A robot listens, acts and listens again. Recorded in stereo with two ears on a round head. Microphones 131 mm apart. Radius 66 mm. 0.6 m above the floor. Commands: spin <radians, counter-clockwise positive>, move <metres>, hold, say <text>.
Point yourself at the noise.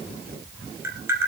spin -0.26
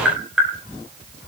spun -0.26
say Found it: tapping, straight ahead.